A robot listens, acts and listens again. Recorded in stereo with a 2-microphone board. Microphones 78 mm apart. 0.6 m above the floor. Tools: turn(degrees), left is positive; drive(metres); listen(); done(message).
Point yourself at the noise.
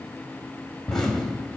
turn(degrees=30)
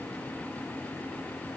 listen()
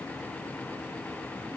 done("I heard an explosion, but can't make it out now. It was about 25° right or 145° left.")